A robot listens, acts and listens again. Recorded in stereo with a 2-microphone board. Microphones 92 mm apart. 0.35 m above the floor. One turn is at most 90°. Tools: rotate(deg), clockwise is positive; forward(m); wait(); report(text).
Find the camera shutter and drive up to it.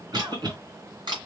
rotate(60)
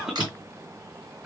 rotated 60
wait()
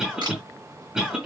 rotate(55)
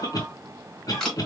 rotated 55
forward(1.0)
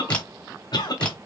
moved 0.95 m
wait()
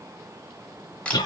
rotate(-15)
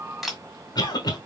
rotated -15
forward(1.0)
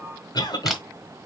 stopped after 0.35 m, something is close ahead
report("Arrived at the camera shutter, straight ahead.")